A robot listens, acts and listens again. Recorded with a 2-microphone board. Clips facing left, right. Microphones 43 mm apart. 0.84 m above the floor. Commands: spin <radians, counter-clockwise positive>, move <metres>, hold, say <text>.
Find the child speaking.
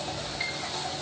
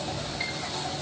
hold
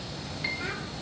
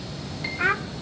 spin -0.96
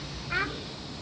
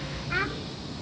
say Facing the child speaking, 1 to 2 m away.